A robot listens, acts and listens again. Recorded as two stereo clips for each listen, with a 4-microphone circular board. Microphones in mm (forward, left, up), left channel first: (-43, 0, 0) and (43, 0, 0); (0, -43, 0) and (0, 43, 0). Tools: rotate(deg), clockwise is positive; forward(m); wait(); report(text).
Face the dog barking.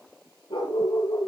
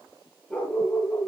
rotate(170)
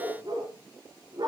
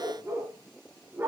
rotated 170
rotate(-30)
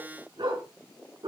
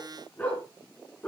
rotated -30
rotate(15)
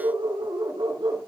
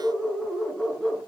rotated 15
report("Facing the dog barking.")